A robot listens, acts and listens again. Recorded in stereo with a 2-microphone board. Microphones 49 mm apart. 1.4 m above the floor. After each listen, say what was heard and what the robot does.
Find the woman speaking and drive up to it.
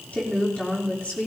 The woman speaking: about 25° left or 155° left. Turn 25° left.
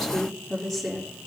Drive 1.0 m forward.
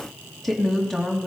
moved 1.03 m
Drive 1.0 m forward.
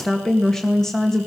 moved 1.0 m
The woman speaking is now 10° left. Turn 10° left.
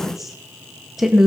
Drive 1.0 m forward.
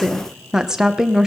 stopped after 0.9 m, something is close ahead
The woman speaking is now 10° right. Turn 10° right.
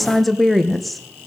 Arrived at the woman speaking, straight ahead.